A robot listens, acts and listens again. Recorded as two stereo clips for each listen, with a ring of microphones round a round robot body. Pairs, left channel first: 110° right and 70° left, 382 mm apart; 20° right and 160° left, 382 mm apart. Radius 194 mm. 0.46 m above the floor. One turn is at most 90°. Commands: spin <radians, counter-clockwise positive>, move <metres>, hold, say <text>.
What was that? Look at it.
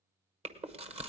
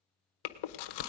say Found it: chewing, straight ahead.